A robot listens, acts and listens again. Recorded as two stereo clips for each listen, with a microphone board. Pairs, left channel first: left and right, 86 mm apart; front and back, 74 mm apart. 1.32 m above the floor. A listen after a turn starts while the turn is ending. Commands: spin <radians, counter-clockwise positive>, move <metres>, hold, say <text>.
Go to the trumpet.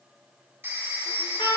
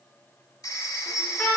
spin 1.31
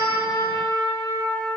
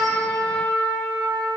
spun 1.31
spin 0.52
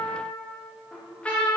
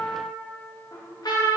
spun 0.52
spin 0.26
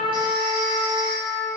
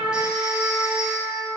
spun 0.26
move 1.0
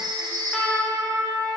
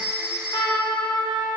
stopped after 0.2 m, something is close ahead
say Something is in my way. I am facing the trumpet but have not reached it.